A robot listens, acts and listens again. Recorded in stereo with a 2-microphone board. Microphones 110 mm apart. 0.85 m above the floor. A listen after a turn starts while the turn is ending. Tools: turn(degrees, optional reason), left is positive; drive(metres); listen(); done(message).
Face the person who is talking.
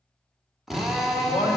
turn(degrees=75, reason="The man speaking: about 75° left or 105° left.")
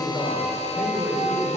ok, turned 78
done("Facing the man speaking, 2 to 4 m away.")